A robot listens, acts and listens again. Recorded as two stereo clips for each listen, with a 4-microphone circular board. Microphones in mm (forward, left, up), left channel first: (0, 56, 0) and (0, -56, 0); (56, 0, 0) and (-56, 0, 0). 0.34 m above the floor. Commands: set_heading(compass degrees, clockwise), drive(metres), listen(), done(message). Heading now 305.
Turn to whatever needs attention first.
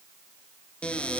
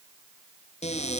listen()
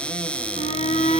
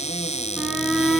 set_heading(210)
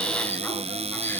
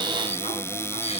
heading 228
set_heading(208)
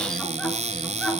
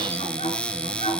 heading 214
done("Found it: a shout, straight ahead, over 4 m away.")